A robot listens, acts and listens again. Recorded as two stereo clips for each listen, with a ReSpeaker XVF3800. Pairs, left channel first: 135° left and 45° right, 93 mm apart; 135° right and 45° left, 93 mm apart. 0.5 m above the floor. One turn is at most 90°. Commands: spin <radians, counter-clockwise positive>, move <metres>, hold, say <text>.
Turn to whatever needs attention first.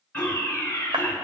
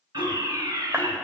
spin 1.22
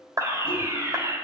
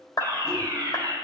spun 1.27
say Facing the fire alarm, 2 to 4 m away.